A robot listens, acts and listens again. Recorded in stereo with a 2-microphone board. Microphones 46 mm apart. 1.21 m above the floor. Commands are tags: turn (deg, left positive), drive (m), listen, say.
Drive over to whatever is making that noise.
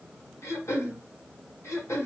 <turn deg="90"/>
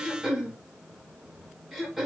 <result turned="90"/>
<drive m="1.0"/>
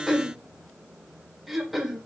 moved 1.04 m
<drive m="1.0"/>
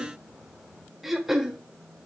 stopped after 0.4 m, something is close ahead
<say>I am next to the throat clearing.</say>